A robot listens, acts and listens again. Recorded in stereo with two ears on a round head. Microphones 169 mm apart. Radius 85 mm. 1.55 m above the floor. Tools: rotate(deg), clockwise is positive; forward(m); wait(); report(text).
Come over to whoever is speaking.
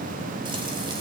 wait()
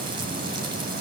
wait()
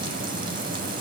report("I can't make out anyone speaking.")